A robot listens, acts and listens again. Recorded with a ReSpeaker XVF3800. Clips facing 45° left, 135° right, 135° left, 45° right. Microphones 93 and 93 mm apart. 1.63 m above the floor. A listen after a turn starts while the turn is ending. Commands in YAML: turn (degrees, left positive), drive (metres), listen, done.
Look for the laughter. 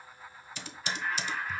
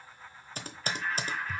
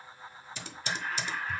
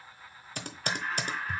turn: -40
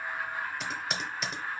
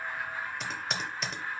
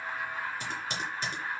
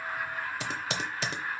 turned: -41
turn: -15
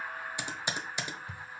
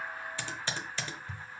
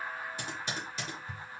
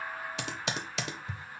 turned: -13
done: "Found it: laughter, straight ahead."